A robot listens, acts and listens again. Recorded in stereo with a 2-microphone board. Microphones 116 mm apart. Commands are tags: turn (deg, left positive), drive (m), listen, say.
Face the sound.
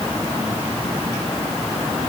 <listen/>
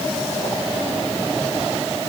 <listen/>
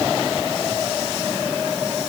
<say>I can't make out anything.</say>